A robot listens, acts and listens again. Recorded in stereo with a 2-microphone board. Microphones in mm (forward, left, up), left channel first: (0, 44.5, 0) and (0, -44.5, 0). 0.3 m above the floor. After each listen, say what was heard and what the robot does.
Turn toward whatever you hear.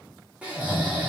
Turn 30° right.
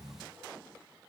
Keep listening.
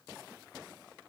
Keep listening.
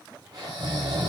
So it is at 135° right. Turn 135° right.
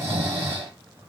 The snoring is now 30° right. Turn 30° right.
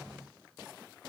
Keep listening.
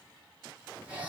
The snoring is now 15° right. Turn 15° right.
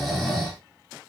Facing the snoring.